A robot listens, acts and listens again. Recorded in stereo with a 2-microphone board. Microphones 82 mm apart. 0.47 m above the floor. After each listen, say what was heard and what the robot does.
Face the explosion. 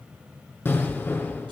The explosion: about 25° left or 155° left. Turn 25° left.
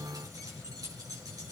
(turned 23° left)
Keep listening.
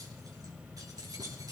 I heard an explosion, but can't make it out now. It was about 5° left or 130° left.